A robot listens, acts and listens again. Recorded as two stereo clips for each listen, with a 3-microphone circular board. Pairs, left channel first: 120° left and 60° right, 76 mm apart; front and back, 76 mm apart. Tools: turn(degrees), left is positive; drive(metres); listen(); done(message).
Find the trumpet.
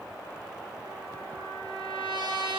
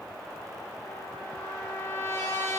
turn(degrees=-55)
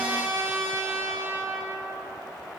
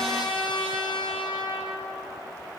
done("Facing the trumpet.")